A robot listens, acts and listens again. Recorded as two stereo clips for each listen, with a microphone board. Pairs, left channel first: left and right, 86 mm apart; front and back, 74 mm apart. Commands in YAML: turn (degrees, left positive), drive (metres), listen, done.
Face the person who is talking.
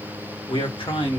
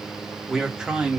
turn: 105
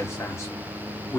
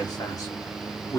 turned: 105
turn: 45
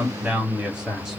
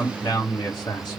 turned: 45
turn: -10
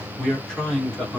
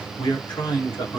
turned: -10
turn: 10
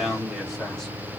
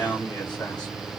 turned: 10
done: "Facing the man speaking, 2 to 4 m away."